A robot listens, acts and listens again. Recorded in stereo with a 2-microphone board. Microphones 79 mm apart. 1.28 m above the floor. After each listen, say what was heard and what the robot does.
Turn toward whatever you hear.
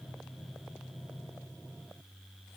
Keep listening.
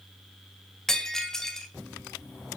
Turn 30° left.
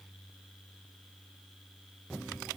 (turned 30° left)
Keep listening.
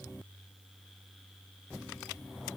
I heard breaking glass, but can't make it out now. It was about 25° right or 145° left.